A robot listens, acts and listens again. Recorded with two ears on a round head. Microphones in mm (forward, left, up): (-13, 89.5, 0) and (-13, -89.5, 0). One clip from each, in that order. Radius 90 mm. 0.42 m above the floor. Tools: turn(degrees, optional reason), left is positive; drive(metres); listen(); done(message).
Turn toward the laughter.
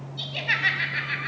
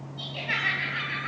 turn(degrees=30, reason="The laughter: about 30° left or 150° left.")
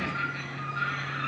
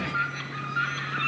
listen()
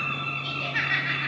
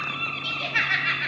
turn(degrees=-25, reason="So it is at 25° right.")
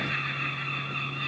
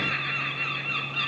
listen()
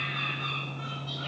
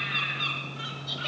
listen()
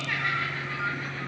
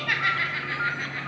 turn(degrees=-35, reason="The laughter is now 35° right.")
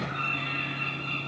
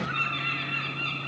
listen()
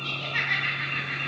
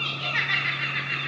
turn(degrees=-10, reason="The laughter is now 10° right.")
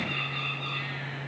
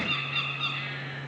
listen()
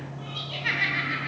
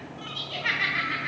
done("Found it: laughter, straight ahead, 2 to 4 m away.")